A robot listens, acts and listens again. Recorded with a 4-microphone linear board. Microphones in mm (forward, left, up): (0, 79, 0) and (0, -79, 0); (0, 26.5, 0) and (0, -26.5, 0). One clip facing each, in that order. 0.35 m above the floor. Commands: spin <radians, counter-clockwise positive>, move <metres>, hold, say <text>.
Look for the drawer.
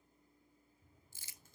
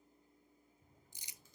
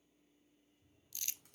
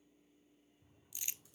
spin -0.96
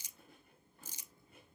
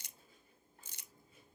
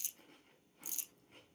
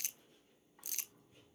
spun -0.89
hold
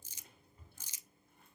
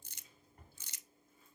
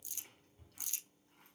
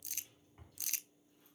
spin -1.31
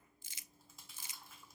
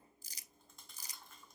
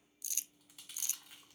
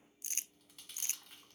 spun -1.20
hold
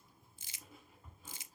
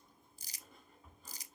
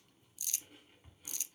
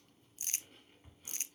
say Found it: a drawer, straight ahead, 2 to 4 m away.